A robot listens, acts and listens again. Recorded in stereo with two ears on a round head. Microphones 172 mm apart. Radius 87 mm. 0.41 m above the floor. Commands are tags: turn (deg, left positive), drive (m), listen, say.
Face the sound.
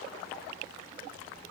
<listen/>
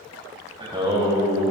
<turn deg="-20"/>
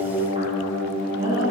<turn deg="-30"/>
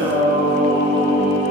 <turn deg="-130"/>
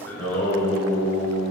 <turn deg="10"/>
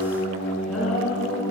<say>Facing the singing, over 4 m away.</say>